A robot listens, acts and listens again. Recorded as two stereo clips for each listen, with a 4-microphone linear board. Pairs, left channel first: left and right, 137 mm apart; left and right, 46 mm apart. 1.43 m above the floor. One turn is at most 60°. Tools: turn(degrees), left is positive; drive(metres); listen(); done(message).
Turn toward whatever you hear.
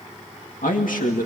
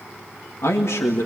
turn(degrees=60)
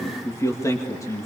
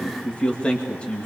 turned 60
turn(degrees=25)
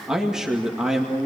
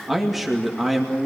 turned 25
done("Found it: a man speaking, straight ahead, 2 to 4 m away.")